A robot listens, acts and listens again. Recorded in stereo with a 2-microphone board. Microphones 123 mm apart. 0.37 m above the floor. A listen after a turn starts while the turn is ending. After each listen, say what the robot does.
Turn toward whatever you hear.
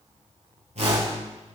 Turn 60° right.
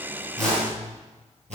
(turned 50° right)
Turn 65° right.
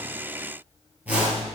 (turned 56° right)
Turn 10° right.
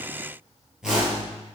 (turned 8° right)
Facing the whoosh.